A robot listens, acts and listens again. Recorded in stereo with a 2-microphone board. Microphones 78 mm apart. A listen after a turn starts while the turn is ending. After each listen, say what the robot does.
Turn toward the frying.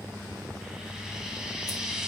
Turn 30° right.
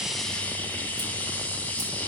Turn 20° left.
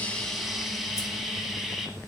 Facing the frying.